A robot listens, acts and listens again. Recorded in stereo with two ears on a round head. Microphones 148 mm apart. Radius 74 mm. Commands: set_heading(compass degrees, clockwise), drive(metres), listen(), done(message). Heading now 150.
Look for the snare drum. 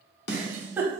set_heading(80)
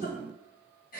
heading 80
listen()
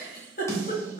set_heading(60)
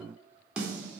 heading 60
done("Facing the snare drum, under 1 m away.")